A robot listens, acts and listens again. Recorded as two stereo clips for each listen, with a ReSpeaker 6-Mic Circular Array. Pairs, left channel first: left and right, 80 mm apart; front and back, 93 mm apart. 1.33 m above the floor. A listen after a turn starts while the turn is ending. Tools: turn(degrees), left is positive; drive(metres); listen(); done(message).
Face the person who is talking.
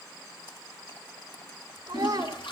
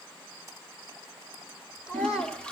turn(degrees=-50)
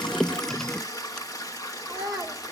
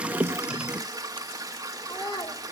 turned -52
done("Found it: a child speaking, straight ahead.")